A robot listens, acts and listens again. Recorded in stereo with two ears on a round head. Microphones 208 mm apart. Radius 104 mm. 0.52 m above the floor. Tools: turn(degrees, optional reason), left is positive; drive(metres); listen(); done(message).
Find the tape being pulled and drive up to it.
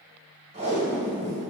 turn(degrees=-30, reason="The tape being pulled: about 30° right or 150° right.")
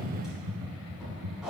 drive(metres=1.0)
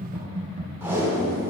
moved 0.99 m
turn(degrees=-15, reason="The tape being pulled is now 15° right.")
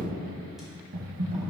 listen()
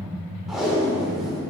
drive(metres=1.0)
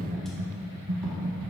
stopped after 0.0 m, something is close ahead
listen()
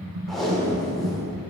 done("I am next to the tape being pulled.")